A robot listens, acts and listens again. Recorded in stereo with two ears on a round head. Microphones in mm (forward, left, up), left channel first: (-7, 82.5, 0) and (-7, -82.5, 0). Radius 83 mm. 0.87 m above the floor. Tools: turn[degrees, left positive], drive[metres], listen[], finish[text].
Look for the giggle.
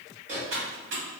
Action: listen[]
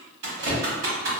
Action: listen[]
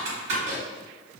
Action: finish[I can't make out a giggle to turn to.]